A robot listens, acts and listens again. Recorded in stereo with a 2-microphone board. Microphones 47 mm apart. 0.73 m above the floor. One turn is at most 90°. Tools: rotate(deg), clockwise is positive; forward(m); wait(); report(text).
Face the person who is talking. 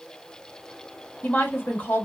rotate(-45)
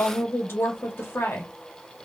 rotate(-80)
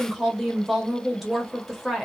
report("Found it: a woman speaking, straight ahead, 1 to 2 m away.")